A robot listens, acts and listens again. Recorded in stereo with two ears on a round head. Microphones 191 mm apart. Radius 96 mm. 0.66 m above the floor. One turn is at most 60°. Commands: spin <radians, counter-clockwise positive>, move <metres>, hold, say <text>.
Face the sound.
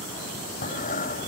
spin 0.61
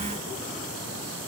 hold
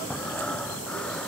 say Facing the breathing.